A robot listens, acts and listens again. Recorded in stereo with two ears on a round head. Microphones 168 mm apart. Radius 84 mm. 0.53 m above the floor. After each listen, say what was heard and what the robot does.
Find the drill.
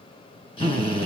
The drill: about 30° left or 150° left. Turn 30° left.
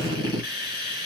So it is at 120° left. Turn 120° left.
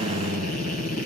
The drill is now 45° left. Turn 45° left.
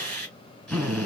Facing the drill.